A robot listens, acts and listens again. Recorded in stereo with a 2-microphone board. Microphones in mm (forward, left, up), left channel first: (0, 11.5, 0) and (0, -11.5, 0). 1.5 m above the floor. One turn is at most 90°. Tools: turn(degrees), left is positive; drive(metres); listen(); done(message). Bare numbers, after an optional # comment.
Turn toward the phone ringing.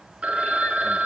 # The phone ringing: about 75° right or 105° right.
turn(-75)
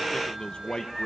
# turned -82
listen()
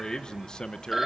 # So it is at 15° right.
turn(-15)
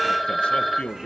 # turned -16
done("Found it: a phone ringing, straight ahead, 2 to 4 m away.")